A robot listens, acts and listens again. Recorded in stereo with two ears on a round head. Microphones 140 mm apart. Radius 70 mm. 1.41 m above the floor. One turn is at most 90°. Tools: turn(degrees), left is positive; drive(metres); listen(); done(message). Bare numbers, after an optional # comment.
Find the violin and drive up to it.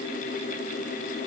listen()
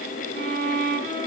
# The violin: about 50° right or 130° right.
turn(-50)
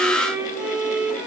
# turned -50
# So it is at 10° right.
turn(-10)
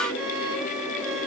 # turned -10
drive(1.0)
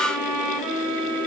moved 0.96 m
drive(1.0)
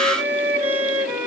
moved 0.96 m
# The violin is now 15° right.
turn(-15)
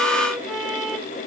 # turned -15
drive(1.0)
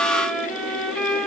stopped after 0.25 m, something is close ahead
done("I am next to the violin.")